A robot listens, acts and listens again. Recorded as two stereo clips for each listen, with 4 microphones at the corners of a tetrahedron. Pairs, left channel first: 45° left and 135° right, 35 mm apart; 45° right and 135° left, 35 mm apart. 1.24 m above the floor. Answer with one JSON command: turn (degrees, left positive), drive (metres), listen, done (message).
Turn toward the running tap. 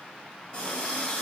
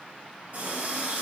{"turn": 100}
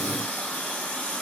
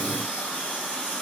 {"turn": 10}
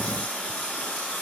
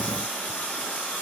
{"done": "Found it: a running tap, straight ahead, 2 to 4 m away."}